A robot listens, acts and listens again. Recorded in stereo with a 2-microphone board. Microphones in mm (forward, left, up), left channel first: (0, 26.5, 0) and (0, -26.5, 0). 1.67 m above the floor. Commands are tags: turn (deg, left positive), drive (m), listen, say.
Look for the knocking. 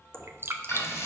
<turn deg="15"/>
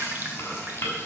<listen/>
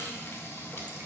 <listen/>
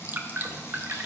<say>I heard knocking, but can't make it out now. It was about straight ahead or 150° left.</say>